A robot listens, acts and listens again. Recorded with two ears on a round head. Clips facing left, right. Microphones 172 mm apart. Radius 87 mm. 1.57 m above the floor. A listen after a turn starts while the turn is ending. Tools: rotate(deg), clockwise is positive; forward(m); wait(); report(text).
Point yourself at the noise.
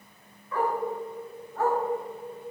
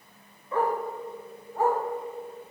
rotate(30)
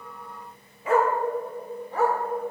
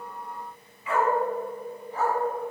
rotate(-50)
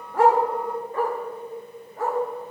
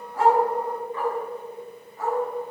rotate(-45)
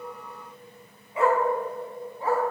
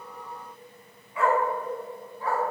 rotate(-20)
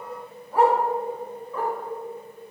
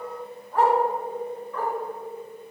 rotate(-10)
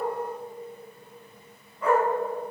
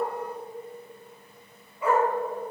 report("Facing the dog barking, 2 to 4 m away.")